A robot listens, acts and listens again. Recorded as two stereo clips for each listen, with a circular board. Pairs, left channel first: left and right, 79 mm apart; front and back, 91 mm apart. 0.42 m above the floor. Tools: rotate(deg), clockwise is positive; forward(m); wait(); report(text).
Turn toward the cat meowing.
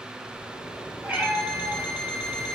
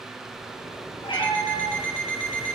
rotate(20)
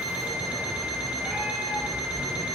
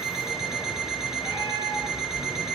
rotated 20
wait()
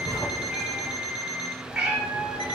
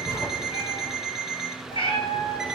report("Found it: a cat meowing, straight ahead.")